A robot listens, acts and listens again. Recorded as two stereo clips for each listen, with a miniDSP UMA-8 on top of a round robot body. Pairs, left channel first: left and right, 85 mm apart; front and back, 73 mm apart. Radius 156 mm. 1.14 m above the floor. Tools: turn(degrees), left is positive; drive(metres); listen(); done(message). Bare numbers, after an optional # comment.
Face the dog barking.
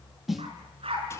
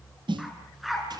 # The dog barking: 90° right.
turn(-90)
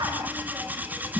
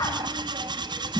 listen()
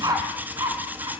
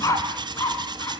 # The dog barking is now 45° right.
turn(-45)
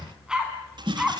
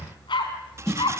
# The dog barking is now 10° right.
turn(-10)
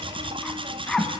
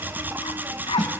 done("Facing the dog barking, 2 to 4 m away.")